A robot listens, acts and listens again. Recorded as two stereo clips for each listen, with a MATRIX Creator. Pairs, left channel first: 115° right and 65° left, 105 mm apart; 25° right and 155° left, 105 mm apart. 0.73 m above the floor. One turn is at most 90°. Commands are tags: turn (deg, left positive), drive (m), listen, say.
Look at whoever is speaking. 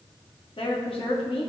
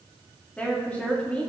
<turn deg="-90"/>
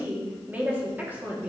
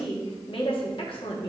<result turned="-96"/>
<say>Found it: a woman speaking, straight ahead, under 1 m away.</say>